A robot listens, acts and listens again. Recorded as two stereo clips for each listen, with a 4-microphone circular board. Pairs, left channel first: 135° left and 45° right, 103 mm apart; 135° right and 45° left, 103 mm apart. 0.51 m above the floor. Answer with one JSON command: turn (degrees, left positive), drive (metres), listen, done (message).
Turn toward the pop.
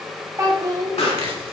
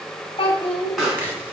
{"turn": 135}
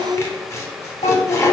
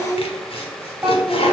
{"done": "I heard a pop from this way, but can't make it out now."}